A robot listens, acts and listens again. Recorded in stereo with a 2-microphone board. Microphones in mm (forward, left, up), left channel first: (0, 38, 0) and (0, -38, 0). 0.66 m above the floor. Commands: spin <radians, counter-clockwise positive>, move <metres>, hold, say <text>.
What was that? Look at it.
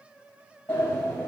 spin 0.52
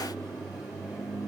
say Facing the sliding door, 2 to 4 m away.